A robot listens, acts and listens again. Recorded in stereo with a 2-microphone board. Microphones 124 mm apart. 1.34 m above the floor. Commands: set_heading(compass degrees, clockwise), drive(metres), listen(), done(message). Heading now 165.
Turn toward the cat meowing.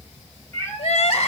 set_heading(145)
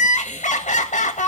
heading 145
listen()
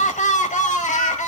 listen()
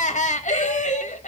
done("I heard a cat meowing, but can't make it out now. It was about straight ahead or 140° left.")